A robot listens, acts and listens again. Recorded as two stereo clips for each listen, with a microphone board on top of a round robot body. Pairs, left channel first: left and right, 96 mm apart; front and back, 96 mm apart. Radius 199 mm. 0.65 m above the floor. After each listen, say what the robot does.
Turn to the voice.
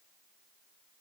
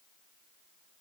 Keep listening.
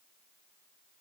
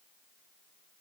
Keep listening.
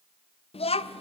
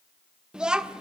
Turn 100° left.
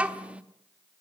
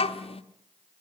Turn 15° right.
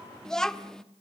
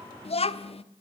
Found it: a child speaking, straight ahead.